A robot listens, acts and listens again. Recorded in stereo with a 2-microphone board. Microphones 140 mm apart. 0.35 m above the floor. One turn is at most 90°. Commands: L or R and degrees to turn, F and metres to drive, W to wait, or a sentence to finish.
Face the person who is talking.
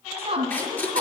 R45
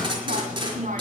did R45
R80
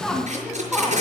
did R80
Found it: a woman speaking, straight ahead, 2 to 4 m away.